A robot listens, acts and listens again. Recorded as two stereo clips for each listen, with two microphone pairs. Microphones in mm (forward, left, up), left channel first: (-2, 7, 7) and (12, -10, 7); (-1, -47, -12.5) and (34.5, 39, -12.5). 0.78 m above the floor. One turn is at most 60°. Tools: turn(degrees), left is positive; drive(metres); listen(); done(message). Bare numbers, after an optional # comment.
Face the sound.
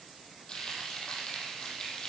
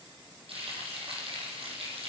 # The frying: 75° left.
turn(60)
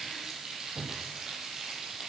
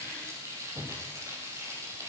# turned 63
# The frying is now 10° left.
turn(10)
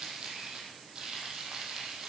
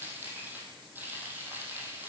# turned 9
done("Facing the frying, over 4 m away.")